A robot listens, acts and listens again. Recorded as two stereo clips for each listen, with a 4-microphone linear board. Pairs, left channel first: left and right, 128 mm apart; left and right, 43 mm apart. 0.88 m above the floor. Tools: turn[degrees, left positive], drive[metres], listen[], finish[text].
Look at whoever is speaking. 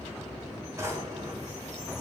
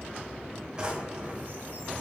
Action: listen[]
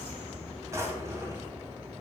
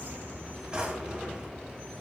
Action: listen[]
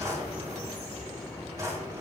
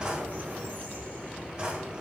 Action: finish[I can't make out anyone speaking to turn to.]